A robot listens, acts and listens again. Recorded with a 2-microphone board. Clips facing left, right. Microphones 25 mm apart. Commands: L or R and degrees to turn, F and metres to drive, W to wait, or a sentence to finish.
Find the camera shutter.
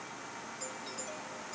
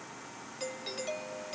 W
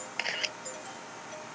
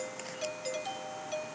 L45
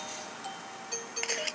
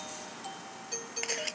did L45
Facing the camera shutter.